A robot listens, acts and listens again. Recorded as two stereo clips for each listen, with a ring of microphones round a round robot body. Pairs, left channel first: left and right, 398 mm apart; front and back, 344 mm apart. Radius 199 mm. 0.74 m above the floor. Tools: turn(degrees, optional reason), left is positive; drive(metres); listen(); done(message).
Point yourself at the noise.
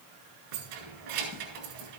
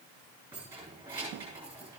turn(degrees=-95, reason="The keys jangling: 95° right.")
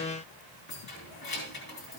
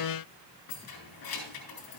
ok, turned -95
turn(degrees=25, reason="The keys jangling is now 25° left.")
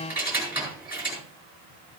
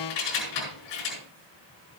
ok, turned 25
done("Found it: keys jangling, straight ahead, over 4 m away.")